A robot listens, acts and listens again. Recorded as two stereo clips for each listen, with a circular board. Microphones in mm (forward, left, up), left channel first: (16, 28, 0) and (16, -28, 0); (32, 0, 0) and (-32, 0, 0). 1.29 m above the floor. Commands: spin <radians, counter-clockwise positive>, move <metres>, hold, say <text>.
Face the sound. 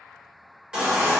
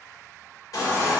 spin -0.26
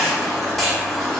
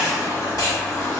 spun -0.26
say Facing the baby crying.